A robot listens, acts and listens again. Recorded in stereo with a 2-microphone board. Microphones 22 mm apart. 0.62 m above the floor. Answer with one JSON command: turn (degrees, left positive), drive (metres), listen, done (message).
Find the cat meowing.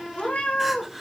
{"turn": 75}
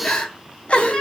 {"listen": true}
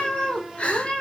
{"turn": 50}
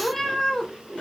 {"turn": 25}
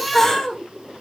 {"turn": 10}
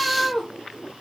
{"turn": 15}
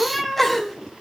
{"done": "Found it: a cat meowing, straight ahead, 1 to 2 m away."}